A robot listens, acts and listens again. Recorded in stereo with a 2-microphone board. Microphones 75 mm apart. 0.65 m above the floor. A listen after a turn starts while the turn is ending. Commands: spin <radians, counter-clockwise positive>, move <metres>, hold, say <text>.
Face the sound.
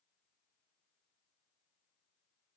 hold
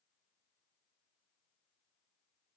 hold
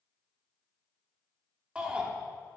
spin -0.52
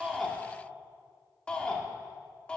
spin 0.26
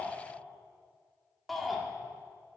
say Found it: a shout, straight ahead, 1 to 2 m away.